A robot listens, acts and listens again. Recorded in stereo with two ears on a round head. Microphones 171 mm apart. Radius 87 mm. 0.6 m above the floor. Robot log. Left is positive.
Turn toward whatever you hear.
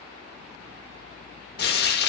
note: The frying: about 55° left or 125° left.
cmd yaw +55
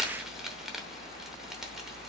end: Facing the frying, under 1 m away.